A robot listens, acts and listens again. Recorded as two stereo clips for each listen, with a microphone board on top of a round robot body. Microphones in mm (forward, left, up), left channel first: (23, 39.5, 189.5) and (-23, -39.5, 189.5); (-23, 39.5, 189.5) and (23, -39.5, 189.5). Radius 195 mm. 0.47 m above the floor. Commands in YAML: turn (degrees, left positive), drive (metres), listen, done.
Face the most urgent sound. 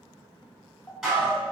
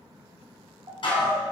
turn: -15
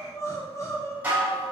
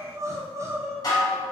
done: "Found it: crying, straight ahead."